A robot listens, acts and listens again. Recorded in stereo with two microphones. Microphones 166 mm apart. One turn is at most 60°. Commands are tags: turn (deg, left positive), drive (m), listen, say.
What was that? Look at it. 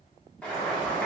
<turn deg="30"/>
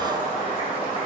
<turn deg="60"/>
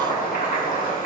<turn deg="60"/>
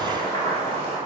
<turn deg="20"/>
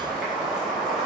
<say>Facing the boiling, 1 to 2 m away.</say>